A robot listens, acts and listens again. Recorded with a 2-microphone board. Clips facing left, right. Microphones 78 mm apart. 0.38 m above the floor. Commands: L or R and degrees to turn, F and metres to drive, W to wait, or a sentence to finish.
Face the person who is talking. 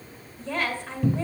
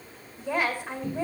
R30
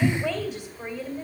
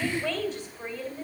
L15
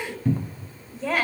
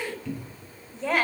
Facing the woman speaking.